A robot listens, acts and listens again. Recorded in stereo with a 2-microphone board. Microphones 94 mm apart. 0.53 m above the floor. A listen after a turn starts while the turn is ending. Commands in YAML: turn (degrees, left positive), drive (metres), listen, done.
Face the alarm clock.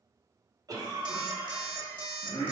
turn: -50
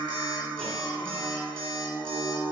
turn: -75
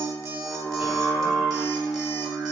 listen: true
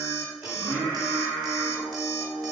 done: "Facing the alarm clock, under 1 m away."